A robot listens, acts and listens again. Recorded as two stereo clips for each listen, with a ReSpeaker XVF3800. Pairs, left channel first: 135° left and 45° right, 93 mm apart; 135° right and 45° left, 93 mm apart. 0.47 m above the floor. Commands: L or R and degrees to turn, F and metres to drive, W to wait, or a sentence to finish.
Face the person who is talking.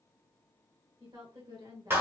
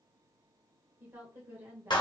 R20
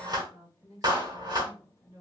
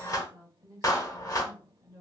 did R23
Facing the woman speaking.